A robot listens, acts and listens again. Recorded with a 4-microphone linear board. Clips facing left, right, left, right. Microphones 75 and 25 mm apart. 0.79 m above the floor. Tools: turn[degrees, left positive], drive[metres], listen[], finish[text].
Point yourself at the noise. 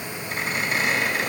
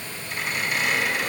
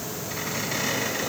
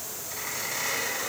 Thought: The squeak: about 40° left or 140° left.
Action: turn[40]
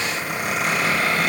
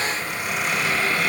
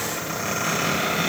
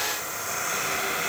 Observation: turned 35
Thought: So it is at 105° left.
Action: turn[105]
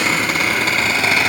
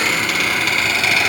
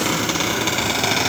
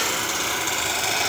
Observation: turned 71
Thought: The squeak is now 35° left.
Action: turn[35]
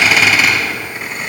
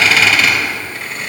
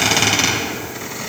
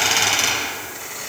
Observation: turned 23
Thought: The squeak is now 15° left.
Action: turn[15]
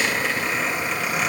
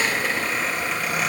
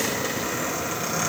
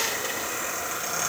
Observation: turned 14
Action: finish[Facing the squeak, 2 to 4 m away.]